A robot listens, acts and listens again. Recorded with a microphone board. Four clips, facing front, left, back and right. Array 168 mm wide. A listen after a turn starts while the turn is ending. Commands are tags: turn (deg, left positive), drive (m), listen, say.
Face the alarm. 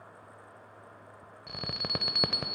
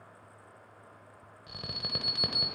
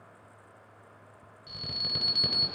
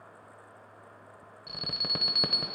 <turn deg="-15"/>
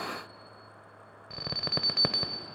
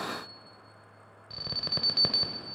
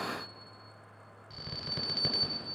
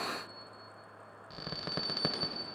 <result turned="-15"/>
<say>Found it: an alarm, straight ahead.</say>